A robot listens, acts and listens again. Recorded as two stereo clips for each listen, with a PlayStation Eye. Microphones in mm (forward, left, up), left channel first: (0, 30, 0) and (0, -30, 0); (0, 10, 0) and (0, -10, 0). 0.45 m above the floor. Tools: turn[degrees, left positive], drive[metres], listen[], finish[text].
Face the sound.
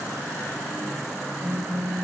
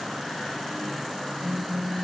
Thought: The phone buzzing: about 40° right or 140° right.
Action: turn[-40]
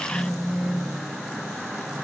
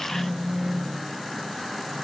Action: finish[Found it: a phone buzzing, straight ahead.]